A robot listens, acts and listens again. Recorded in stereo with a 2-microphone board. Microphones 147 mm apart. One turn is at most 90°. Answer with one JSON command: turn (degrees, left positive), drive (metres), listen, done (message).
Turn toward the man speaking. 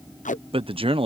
{"turn": -40}
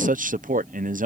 {"turn": -90}
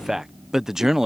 {"done": "Facing the man speaking."}